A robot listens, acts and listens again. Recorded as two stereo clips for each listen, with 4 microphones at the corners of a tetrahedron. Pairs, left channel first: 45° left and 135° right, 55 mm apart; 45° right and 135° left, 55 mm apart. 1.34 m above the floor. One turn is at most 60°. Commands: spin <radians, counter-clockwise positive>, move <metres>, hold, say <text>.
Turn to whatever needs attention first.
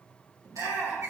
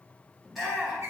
spin -1.05
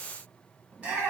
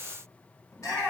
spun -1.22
spin -1.05
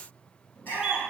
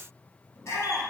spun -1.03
spin -0.17
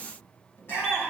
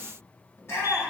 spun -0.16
say Facing the shout, 2 to 4 m away.